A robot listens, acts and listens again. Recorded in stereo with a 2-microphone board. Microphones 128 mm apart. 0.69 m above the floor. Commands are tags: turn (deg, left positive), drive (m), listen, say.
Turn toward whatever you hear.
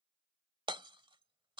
<turn deg="-40"/>
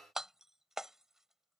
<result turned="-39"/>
<say>Found it: hammering, straight ahead.</say>